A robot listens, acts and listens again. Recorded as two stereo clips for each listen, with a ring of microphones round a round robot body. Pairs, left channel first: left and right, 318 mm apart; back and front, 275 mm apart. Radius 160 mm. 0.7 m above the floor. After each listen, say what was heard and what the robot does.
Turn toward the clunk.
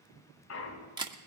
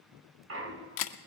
The clunk: 40° left. Turn 40° left.
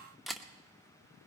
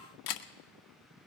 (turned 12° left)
Nothing new. It was at 30° left. Turn 30° left.
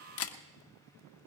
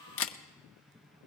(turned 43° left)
Nothing new. It was at 15° right. Turn 15° right.
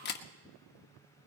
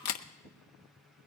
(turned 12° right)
I heard a clunk from this way, but can't make it out now.